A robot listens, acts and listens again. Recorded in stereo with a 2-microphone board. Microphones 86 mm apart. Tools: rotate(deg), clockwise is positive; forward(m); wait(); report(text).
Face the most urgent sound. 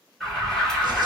rotate(-30)
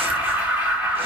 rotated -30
rotate(20)
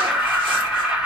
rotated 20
rotate(10)
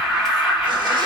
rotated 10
report("Found it: an alarm, straight ahead.")